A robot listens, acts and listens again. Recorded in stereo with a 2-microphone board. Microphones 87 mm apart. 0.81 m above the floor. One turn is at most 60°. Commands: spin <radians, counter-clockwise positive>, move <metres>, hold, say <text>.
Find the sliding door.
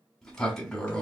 spin 0.52
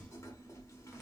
spin 1.05
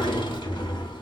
spin 1.05
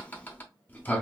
spin 0.44
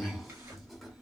say Found it: a sliding door, straight ahead, under 1 m away.